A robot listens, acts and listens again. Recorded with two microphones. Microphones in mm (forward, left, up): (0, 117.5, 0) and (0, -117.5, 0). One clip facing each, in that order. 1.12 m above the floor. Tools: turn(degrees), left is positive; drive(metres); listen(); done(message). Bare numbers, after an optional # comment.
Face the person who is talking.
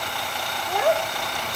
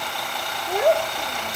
# The child speaking: about 30° right or 150° right.
turn(-30)
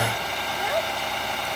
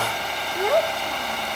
# So it is at 120° right.
turn(-120)
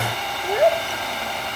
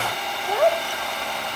# The child speaking is now 20° left.
turn(20)
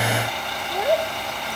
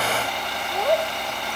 done("Found it: a child speaking, straight ahead.")